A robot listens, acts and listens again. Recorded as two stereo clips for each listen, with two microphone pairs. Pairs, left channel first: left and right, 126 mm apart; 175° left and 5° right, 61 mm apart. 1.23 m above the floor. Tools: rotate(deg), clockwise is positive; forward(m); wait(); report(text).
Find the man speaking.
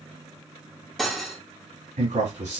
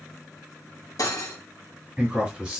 rotate(90)
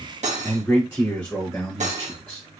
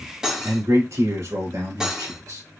rotate(-10)
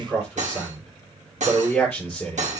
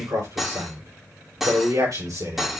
report("Found it: a man speaking, straight ahead.")